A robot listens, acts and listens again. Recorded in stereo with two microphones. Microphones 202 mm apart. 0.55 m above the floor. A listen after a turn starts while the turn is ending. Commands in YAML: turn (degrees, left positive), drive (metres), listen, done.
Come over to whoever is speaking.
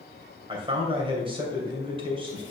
turn: -25
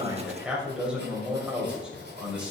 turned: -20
drive: 1.0
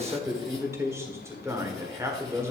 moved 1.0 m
turn: -15
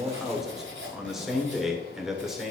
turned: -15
drive: 1.0
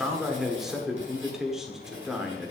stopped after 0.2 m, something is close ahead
done: "I am next to the man speaking."